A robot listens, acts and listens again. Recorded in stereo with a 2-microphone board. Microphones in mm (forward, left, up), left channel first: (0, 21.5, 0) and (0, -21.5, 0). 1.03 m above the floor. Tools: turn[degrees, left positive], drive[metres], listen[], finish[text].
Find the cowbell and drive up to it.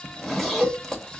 Thought: The cowbell: about 40° right or 140° right.
Action: turn[-40]
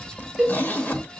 Action: drive[1.0]
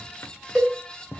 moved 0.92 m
Action: drive[1.0]
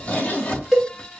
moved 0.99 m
Action: drive[1.0]
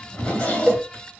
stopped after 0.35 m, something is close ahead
Action: finish[I am next to the cowbell.]